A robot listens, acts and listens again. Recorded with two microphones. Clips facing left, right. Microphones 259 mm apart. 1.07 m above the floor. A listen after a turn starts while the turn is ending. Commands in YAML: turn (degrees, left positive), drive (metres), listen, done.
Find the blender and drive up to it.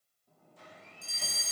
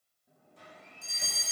turn: -70
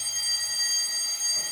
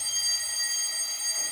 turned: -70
listen: true
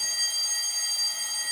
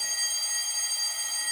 listen: true
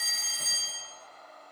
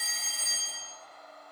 drive: 1.0
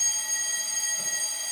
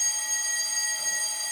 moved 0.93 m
listen: true
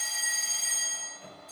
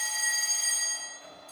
listen: true
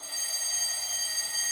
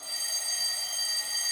done: "Facing where the blender came from. I can't hear it now. I did not reach it."